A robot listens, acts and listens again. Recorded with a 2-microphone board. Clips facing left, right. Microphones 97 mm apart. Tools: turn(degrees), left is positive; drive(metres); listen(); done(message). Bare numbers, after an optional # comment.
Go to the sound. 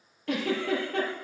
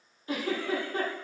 # The giggle: about 70° left or 110° left.
turn(70)
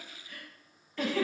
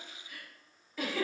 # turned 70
drive(1.0)
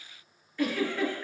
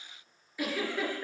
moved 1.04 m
# The giggle is now 10° right.
turn(-10)
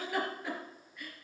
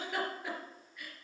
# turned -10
drive(1.0)
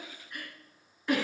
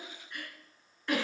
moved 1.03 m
drive(1.0)
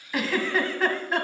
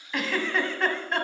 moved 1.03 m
drive(1.0)
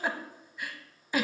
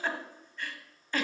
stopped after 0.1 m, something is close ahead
# The giggle is now 10° left.
turn(10)
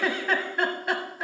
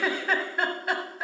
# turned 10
done("I am next to the giggle.")